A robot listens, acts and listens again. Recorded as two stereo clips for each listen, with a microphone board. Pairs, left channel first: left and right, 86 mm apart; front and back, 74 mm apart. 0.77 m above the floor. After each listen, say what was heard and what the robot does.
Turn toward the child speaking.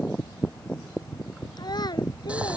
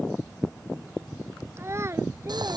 The child speaking: 130° left. Turn 130° left.
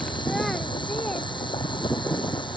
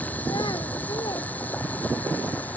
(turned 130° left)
Keep listening.
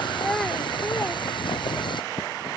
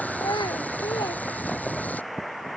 Found it: a child speaking, straight ahead.